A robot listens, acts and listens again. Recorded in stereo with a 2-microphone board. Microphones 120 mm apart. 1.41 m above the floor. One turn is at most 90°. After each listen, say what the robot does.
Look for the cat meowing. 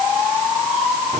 Keep listening.
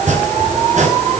Keep listening.
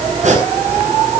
I can't make out a cat meowing, only chopping.